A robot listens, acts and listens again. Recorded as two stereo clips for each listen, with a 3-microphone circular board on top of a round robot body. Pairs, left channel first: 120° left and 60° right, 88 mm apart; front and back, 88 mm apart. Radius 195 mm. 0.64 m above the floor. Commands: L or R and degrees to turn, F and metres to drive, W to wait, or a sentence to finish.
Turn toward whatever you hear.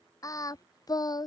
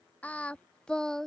L85
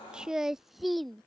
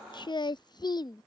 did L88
L35
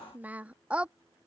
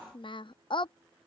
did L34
L15
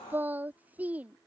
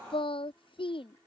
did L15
L15
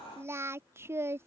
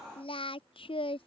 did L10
Facing the singing.